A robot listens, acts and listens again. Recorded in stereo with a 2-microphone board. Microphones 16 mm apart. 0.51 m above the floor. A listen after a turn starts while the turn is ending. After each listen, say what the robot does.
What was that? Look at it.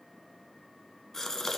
Turn 35° left.
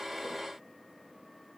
Keep listening.
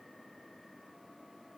I heard a gasp, but can't make it out now. It was about straight ahead or 110° left.